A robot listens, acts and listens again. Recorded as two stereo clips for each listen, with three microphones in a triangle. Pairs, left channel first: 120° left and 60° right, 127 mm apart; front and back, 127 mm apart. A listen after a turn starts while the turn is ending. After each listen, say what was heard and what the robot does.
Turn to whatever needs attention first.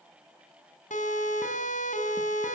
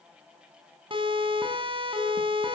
The siren: 130° left. Turn 130° left.
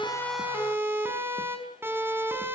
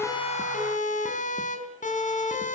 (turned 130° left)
The siren is now 15° left. Turn 15° left.
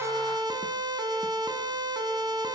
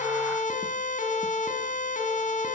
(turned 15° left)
Facing the siren, over 4 m away.